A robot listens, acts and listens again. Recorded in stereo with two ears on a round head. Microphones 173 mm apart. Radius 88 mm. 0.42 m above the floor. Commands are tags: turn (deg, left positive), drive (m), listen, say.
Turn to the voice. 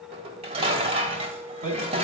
<turn deg="-40"/>
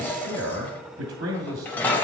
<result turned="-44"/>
<turn deg="-90"/>
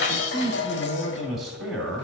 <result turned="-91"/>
<say>Facing the man speaking.</say>